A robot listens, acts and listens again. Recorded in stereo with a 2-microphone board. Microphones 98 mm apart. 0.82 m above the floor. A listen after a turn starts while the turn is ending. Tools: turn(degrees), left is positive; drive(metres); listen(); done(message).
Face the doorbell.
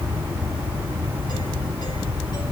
listen()
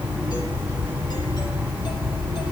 listen()
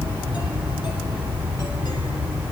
done("I can't make out a doorbell.")